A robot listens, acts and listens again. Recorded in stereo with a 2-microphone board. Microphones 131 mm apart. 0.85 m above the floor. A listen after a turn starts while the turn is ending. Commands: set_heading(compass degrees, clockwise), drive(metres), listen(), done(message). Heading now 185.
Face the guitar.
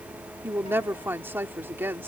listen()
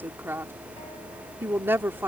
listen()
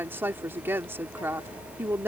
done("I can't make out a guitar to turn to.")